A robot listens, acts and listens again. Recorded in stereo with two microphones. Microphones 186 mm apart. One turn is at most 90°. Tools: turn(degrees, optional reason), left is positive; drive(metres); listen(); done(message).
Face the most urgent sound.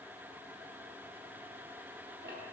listen()
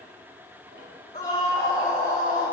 turn(degrees=50, reason="The scream: about 50° left or 130° left.")
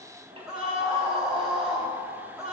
done("Facing the scream.")